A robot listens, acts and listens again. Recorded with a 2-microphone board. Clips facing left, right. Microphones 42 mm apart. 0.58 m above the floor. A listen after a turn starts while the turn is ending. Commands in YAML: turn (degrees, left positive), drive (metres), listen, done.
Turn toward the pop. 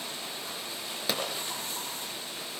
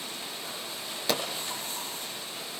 turn: 30
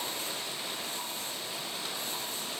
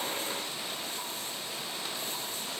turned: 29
listen: true
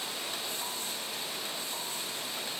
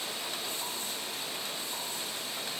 done: "I heard a pop, but can't make it out now. It was about 25° right or 145° left."